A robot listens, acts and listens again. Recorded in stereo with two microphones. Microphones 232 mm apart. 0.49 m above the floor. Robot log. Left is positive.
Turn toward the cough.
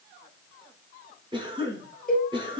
note: The cough: about 20° right or 160° right.
cmd yaw -20
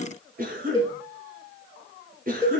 note: So it is at 140° right.
cmd yaw -140
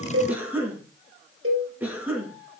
end: Found it: a cough, straight ahead.